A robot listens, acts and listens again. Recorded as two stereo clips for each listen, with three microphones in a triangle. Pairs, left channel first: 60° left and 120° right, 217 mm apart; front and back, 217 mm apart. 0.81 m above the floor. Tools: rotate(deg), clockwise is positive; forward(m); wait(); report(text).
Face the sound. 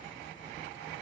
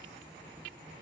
wait()
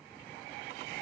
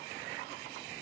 wait()
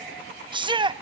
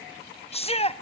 rotate(55)
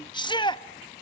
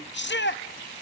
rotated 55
report("Facing the shout.")